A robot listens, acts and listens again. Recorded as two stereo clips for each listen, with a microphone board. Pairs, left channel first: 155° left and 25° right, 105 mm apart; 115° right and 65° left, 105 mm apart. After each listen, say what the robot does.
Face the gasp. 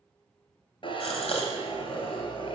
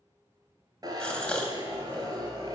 Turn 165° left.
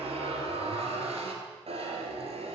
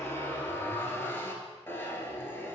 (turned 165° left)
I heard a gasp from this way, but can't make it out now.